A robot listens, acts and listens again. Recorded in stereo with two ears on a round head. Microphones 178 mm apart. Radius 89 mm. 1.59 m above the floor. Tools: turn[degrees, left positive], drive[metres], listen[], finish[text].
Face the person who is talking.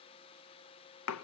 Action: listen[]
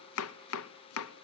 Action: listen[]
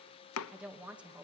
Action: turn[-30]
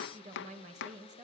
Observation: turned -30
Thought: So it is at 140° right.
Action: turn[-140]
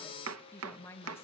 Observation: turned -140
Thought: The woman speaking is now 10° left.
Action: turn[10]
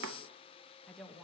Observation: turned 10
Action: finish[Facing the woman speaking, 2 to 4 m away.]